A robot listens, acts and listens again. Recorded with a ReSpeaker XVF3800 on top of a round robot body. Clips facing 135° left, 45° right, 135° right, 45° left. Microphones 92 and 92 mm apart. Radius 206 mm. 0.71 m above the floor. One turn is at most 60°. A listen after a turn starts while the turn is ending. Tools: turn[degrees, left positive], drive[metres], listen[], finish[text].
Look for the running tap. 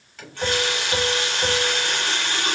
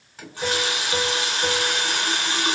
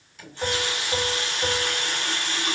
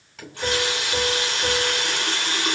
Thought: The running tap: 25° left.
Action: turn[25]
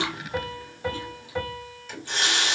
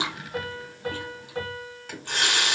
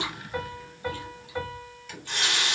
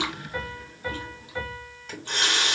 Action: finish[Facing the running tap.]